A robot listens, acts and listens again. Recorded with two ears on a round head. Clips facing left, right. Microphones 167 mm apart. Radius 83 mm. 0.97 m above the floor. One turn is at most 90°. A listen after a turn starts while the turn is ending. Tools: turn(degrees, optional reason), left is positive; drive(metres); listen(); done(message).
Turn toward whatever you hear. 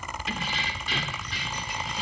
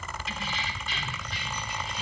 turn(degrees=60, reason="The keys jangling: about 60° left or 120° left.")
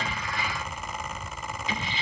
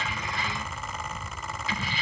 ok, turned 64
turn(degrees=20, reason="So it is at 20° left.")
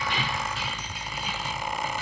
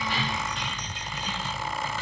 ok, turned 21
turn(degrees=10, reason="The keys jangling is now 10° left.")
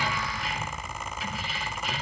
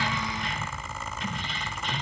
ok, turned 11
done("Facing the keys jangling, 2 to 4 m away.")